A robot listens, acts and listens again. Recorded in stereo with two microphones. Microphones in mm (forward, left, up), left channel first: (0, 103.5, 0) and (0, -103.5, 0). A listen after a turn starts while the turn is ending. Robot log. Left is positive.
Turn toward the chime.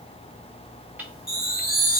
note: The chime: about 40° left or 140° left.
cmd yaw +40
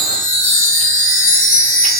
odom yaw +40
note: So it is at 100° left.
cmd yaw +100
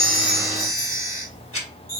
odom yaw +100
note: The chime is now 35° left.
cmd yaw +35
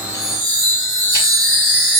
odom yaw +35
end: Found it: a chime, straight ahead.